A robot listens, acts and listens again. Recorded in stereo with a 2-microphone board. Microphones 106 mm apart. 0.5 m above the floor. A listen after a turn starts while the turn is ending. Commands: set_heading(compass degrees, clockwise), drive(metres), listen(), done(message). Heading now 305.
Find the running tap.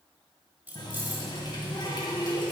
set_heading(260)
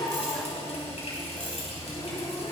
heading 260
set_heading(170)
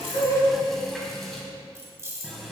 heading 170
done("Found it: a running tap, straight ahead, 2 to 4 m away.")